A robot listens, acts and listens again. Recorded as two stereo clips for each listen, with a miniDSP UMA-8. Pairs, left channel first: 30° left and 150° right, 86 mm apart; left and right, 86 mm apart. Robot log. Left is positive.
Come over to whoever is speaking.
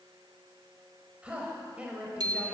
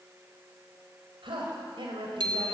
note: The woman speaking: 75° right.
cmd yaw -75
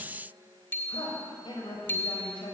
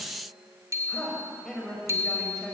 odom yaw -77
cmd fwd 1.0
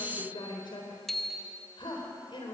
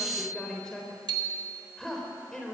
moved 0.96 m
note: The woman speaking is now 10° left.
cmd yaw +10
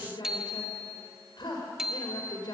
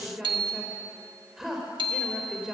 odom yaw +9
cmd fwd 1.0
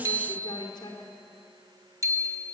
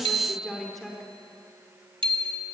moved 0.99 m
cmd fwd 1.0
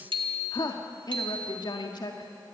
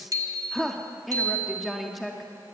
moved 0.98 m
cmd fwd 1.0
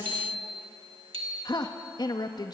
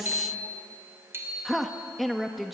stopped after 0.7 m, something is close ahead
end: Arrived at the woman speaking, straight ahead.